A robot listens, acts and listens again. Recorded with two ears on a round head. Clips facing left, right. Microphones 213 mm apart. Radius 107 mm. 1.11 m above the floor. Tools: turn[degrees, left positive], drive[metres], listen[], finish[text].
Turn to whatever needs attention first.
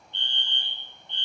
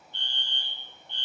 Thought: The fire alarm: about 25° left or 155° left.
Action: turn[25]
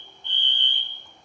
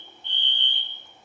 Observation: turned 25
Thought: So it is at 130° left.
Action: turn[130]
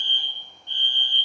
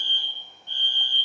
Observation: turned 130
Thought: The fire alarm is now 20° left.
Action: turn[20]
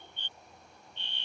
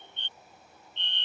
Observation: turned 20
Thought: The fire alarm is now 10° left.
Action: turn[10]
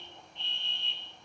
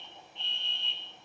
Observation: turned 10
Action: finish[Found it: a fire alarm, straight ahead.]